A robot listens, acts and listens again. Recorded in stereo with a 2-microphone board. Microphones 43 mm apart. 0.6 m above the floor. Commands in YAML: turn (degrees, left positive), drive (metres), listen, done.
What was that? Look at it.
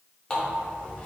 turn: 25
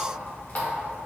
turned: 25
turn: 130
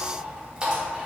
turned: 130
turn: -25
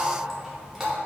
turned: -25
turn: -10
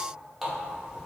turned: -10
done: "Found it: a running tap, straight ahead."